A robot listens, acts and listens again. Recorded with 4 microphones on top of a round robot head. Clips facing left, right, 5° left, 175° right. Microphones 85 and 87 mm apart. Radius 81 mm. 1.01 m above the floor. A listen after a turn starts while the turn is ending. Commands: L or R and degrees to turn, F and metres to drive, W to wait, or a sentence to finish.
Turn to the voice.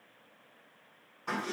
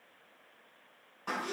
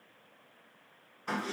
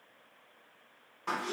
W
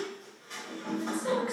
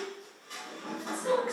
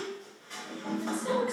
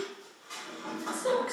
L170
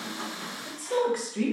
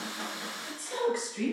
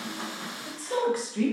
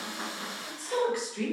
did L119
L55
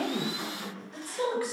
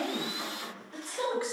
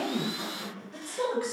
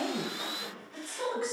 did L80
R25
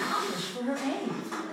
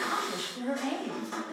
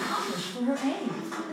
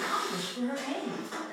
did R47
L20
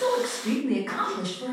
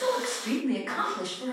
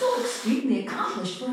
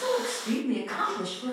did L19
Facing the woman speaking.